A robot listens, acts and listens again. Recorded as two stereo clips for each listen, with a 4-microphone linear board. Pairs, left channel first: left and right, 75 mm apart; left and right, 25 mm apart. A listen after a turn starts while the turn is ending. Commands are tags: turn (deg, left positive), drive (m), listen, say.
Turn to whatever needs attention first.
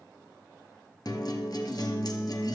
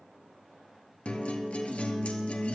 <listen/>
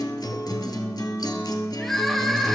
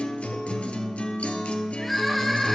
<turn deg="30"/>
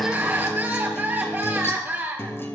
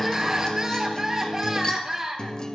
<turn deg="-25"/>
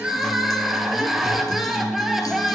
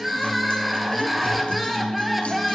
<say>Facing the crying, 1 to 2 m away.</say>